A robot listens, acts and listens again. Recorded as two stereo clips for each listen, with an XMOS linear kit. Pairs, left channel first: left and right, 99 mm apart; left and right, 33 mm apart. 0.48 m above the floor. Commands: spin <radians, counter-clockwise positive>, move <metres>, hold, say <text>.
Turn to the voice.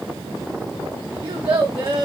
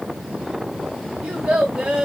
spin -0.96
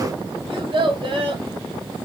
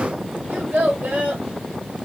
spin -1.13
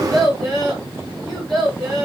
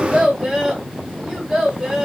say Found it: a child speaking, straight ahead.